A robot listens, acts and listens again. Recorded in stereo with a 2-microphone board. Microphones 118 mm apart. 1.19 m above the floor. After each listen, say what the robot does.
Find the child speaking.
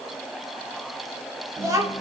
Turn 30° right.
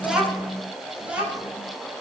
Turn 10° right.
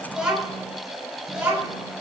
Turn 10° right.
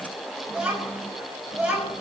Found it: a child speaking, straight ahead.